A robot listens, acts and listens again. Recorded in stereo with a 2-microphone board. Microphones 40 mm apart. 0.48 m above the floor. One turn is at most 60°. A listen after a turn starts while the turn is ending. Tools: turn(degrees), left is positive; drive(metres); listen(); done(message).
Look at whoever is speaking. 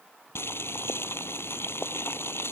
listen()
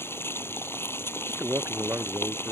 turn(degrees=-60)
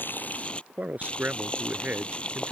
turn(degrees=-45)
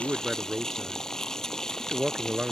turn(degrees=-30)
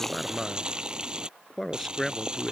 done("Found it: a man speaking, straight ahead.")